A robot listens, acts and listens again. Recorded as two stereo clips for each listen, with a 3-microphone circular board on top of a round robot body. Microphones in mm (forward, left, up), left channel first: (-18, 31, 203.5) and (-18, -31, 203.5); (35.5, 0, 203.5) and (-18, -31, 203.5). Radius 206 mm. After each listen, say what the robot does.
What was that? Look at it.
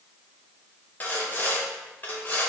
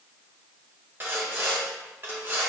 Turn 155° left.
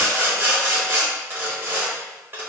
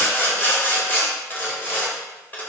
Turn 35° right.
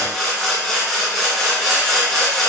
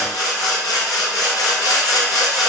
Facing the sawing.